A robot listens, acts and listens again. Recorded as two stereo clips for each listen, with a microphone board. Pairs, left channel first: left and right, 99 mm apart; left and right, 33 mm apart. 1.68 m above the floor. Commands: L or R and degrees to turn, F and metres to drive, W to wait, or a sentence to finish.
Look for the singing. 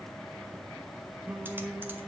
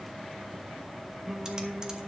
R30
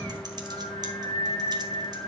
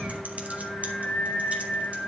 L55
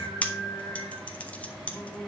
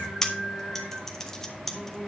L10
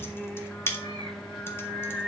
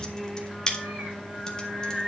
Facing the singing.